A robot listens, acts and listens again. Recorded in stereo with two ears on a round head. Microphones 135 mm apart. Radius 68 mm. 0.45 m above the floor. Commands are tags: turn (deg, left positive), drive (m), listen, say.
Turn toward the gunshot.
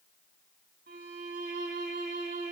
<listen/>
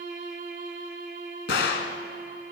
<turn deg="90"/>
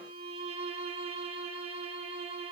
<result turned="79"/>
<turn deg="10"/>
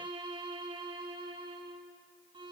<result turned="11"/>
<say>I heard a gunshot from this way, but can't make it out now.</say>